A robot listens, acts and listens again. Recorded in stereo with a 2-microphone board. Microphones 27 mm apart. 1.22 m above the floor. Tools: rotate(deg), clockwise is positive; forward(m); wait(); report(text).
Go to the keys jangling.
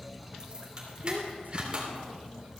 rotate(40)
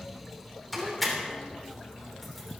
forward(1.0)
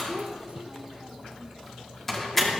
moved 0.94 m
rotate(-10)
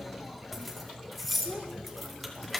forward(1.0)
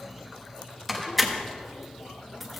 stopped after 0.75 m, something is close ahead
report("Arrived at the keys jangling, straight ahead.")